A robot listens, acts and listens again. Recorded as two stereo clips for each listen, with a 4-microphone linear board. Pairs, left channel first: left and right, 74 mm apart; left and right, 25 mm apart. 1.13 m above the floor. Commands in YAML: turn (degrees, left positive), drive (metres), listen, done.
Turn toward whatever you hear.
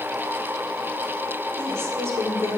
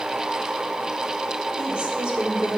turn: -40
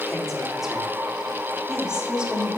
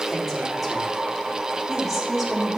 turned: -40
turn: -15
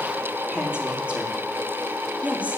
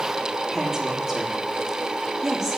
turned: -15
turn: -20
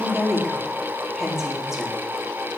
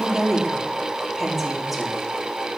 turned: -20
done: "Found it: a woman speaking, straight ahead, 2 to 4 m away."